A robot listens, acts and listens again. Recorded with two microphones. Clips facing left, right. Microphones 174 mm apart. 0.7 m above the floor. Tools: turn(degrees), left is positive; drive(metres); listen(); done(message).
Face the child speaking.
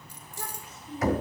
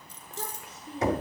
turn(degrees=-65)
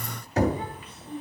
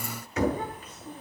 turn(degrees=-45)
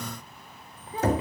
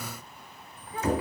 turn(degrees=25)
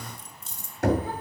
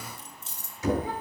listen()
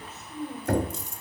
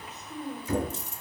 turn(degrees=-15)
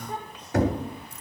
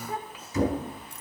done("Facing the child speaking, 2 to 4 m away.")